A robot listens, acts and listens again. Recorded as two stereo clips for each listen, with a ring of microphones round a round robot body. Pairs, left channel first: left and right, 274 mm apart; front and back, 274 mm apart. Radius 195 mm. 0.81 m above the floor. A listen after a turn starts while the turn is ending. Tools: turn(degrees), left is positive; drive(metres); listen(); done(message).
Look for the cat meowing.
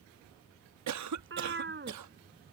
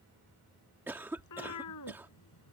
turn(degrees=-40)
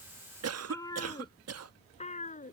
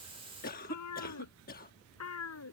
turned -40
turn(degrees=30)
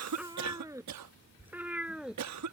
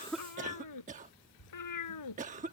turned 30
done("Found it: a cat meowing, straight ahead.")